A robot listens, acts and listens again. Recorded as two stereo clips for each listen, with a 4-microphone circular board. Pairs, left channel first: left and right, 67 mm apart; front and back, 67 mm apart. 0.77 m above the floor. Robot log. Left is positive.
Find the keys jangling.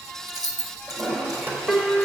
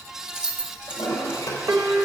note: The keys jangling: 105° right.
cmd yaw -105
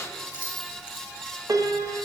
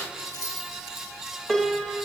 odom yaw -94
note: The keys jangling is now 20° right.
cmd yaw -20
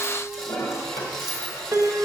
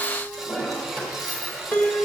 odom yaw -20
cmd idle
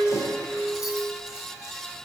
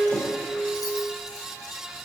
cmd idle
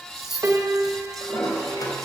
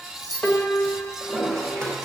end: Facing the keys jangling, over 4 m away.